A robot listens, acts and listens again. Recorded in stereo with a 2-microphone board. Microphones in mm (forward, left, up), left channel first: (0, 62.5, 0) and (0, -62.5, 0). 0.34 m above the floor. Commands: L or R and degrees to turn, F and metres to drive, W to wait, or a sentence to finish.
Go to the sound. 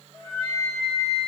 R55
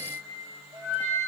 R75
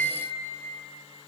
F1.0
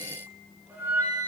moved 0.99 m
R15
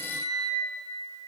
F1.0
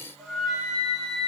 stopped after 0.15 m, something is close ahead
I am next to the flute.